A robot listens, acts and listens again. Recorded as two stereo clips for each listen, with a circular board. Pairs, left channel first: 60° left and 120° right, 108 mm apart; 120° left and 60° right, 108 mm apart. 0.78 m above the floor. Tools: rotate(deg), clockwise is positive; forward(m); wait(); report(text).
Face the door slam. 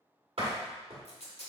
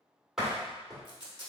rotate(145)
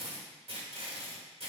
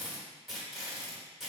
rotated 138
rotate(10)
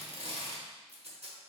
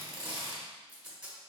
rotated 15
report("Facing where the door slam came from. I can't hear it now.")